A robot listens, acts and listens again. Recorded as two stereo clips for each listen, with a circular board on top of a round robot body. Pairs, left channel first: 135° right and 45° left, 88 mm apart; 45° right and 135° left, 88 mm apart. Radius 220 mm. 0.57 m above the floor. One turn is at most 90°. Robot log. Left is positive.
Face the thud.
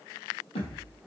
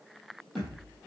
note: The thud: 135° right.
cmd yaw -90
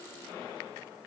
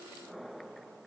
note: Nothing new. It was at 45° right.
cmd yaw -45
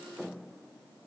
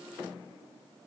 end: I heard a thud from this way, but can't make it out now.